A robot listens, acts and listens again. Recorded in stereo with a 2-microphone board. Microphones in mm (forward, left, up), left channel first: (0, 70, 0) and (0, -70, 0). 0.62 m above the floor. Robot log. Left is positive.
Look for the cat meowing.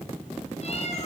note: The cat meowing: about 50° left or 130° left.
cmd yaw +50
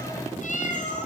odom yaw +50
note: So it is at 60° left.
cmd yaw +60
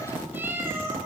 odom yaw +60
note: The cat meowing is now 20° right.
cmd yaw -20
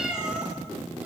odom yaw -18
end: Facing the cat meowing.